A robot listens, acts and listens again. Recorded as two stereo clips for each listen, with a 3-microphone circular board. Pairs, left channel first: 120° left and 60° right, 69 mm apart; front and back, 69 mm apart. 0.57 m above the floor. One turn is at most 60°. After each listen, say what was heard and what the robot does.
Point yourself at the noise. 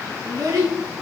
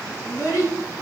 The child speaking: 35° right. Turn 35° right.
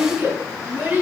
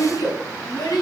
Found it: a child speaking, straight ahead, 2 to 4 m away.